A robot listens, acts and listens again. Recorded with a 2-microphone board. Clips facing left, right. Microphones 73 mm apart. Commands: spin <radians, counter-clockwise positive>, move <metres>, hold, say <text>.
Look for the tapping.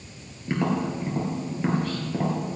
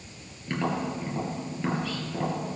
spin 0.26
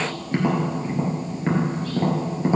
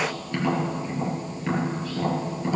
spin 2.62
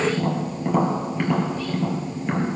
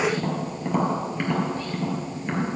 say Found it: tapping, straight ahead.